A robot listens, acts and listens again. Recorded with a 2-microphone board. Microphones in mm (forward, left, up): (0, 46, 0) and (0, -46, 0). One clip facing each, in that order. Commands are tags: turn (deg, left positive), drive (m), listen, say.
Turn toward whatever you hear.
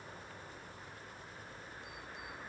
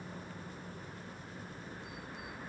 <listen/>
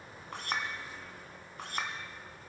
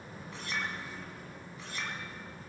<turn deg="60"/>
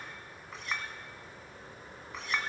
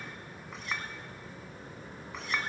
<say>Found it: a clink, straight ahead.</say>